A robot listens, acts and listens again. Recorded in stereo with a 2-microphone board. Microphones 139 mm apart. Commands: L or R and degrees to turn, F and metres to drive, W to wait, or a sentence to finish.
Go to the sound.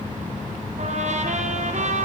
R60
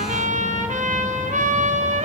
R65
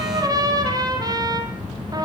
R30
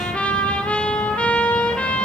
L10
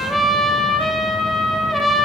F1.0
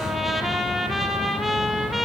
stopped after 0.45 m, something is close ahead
Blocked. The trumpet is further on, straight ahead.